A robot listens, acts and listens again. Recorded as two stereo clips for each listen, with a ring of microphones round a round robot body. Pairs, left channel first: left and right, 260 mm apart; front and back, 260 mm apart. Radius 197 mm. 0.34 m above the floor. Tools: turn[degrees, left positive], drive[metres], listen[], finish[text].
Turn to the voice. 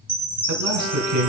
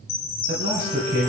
Thought: The man speaking: 110° right.
Action: turn[-110]
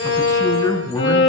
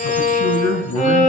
Thought: The man speaking is now 15° left.
Action: turn[15]
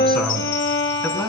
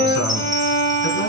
Action: finish[Facing the man speaking.]